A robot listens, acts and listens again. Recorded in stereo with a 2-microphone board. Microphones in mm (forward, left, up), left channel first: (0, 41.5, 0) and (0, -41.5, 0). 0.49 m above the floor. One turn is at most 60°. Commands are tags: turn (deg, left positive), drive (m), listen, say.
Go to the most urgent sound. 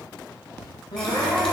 <turn deg="60"/>
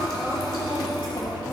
<turn deg="10"/>
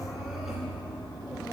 <listen/>
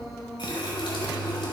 <drive m="1.0"/>
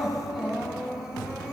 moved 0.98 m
<drive m="1.0"/>
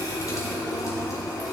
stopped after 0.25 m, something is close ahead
<listen/>
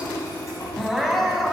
<say>I am next to the crying.</say>